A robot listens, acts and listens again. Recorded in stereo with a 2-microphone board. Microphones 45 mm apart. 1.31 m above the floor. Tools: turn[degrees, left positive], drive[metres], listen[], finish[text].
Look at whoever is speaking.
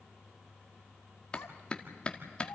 Action: turn[90]
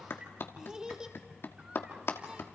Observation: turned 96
Thought: So it is at 20° right.
Action: turn[-20]
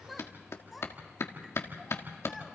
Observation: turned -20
Action: finish[Found it: a child speaking, straight ahead.]